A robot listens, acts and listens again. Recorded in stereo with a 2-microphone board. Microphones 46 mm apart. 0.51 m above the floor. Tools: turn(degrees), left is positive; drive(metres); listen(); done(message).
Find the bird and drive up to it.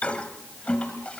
listen()
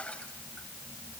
listen()
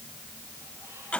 done("I can't make out a bird to turn to.")